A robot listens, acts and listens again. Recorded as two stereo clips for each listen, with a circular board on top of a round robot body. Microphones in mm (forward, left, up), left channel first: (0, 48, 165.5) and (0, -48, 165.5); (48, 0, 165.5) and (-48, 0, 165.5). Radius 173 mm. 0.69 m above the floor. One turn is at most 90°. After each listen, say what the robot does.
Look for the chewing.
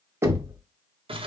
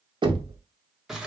Keep listening.
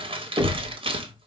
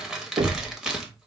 Keep listening.
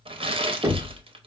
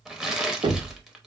I can't make out chewing to turn to.